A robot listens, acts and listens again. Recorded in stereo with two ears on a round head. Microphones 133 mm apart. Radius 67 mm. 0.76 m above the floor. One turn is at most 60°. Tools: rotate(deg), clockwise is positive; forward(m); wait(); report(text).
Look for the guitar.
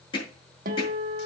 rotate(60)
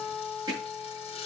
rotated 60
rotate(15)
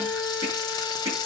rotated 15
report("Facing the guitar, 1 to 2 m away.")